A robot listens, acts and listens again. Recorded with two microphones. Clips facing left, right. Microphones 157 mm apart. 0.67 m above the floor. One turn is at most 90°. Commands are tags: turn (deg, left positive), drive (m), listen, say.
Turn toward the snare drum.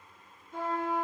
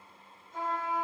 <listen/>
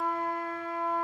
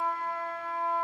<listen/>
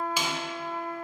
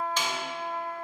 <turn deg="30"/>
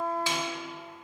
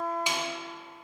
<turn deg="-20"/>
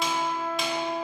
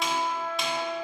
<listen/>
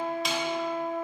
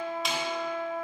<listen/>
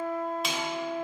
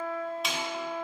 <say>Found it: a snare drum, straight ahead, 1 to 2 m away.</say>